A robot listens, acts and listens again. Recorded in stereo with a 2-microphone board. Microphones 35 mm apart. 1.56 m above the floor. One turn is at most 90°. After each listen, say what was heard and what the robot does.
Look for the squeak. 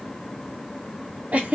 Keep listening.
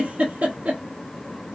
Keep listening.
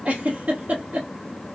I can't make out a squeak, only a giggle.